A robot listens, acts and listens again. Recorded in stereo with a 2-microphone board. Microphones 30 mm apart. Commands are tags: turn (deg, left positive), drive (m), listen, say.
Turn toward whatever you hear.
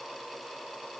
<listen/>
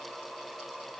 <listen/>
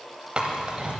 <turn deg="-35"/>
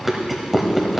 <say>Found it: chewing, straight ahead, 1 to 2 m away.</say>